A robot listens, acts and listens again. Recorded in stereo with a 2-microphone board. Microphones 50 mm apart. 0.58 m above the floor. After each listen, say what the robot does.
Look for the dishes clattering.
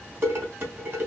Turn 45° right.
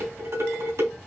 Turn 90° right.
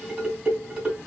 Turn 20° right.
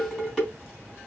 Facing the dishes clattering, 2 to 4 m away.